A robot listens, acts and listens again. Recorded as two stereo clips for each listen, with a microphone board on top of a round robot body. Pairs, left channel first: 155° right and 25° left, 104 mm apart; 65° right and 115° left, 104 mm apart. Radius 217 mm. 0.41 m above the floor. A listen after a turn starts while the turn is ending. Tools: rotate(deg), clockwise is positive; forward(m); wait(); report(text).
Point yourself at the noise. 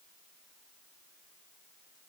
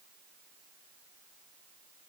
wait()
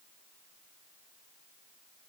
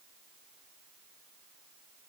wait()
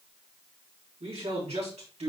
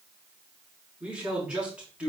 rotate(-30)
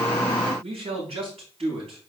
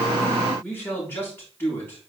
report("Facing the man speaking, over 4 m away.")